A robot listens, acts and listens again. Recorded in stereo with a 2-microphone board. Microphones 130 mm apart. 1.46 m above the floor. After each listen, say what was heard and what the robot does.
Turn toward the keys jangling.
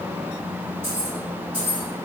Turn 30° right.
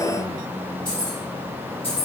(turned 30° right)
So it is at 50° left. Turn 50° left.
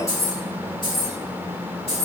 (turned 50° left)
The keys jangling is now 50° left. Turn 50° left.
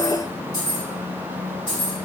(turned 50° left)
The keys jangling is now 35° left. Turn 35° left.
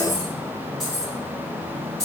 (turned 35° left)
Found it: keys jangling, straight ahead.